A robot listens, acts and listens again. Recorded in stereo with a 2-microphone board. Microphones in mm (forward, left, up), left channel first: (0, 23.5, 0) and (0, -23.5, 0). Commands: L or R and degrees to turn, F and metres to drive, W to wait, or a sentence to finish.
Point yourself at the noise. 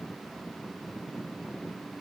W
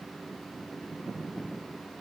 W
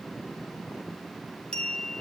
L20
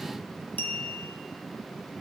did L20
L140
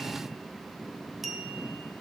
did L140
Found it: a clink, straight ahead.